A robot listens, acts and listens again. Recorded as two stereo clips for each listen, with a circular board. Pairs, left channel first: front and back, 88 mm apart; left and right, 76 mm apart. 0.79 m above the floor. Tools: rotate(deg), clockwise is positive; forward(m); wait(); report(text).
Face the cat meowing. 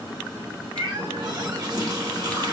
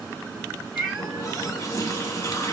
rotate(-180)
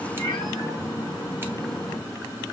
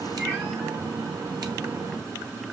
wait()
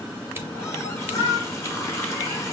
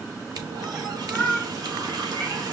rotate(20)
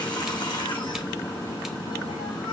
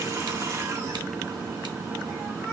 wait()
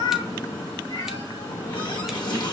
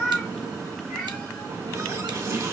report("Facing the cat meowing, over 4 m away.")